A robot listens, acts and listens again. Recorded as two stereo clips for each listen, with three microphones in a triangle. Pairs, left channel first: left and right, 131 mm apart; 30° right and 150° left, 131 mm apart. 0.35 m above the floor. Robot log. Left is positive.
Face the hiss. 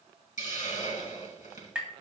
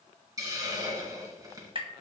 note: The hiss: 90° left.
cmd yaw +90
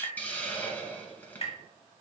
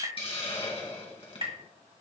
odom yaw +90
note: The hiss is now 15° left.
cmd yaw +15
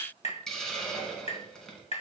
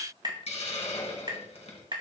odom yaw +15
end: Found it: a hiss, straight ahead.